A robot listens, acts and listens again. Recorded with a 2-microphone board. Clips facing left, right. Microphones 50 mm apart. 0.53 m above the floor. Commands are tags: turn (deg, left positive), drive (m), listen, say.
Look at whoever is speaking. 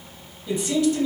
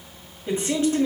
<turn deg="-35"/>
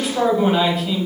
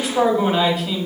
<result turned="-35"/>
<say>Facing the man speaking, 2 to 4 m away.</say>